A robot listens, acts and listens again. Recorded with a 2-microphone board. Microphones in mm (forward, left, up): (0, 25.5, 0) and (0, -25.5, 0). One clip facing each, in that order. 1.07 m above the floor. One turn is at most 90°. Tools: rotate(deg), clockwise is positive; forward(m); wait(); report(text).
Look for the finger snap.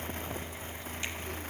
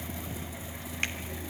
rotate(55)
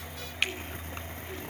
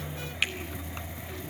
report("Facing the finger snap, 2 to 4 m away.")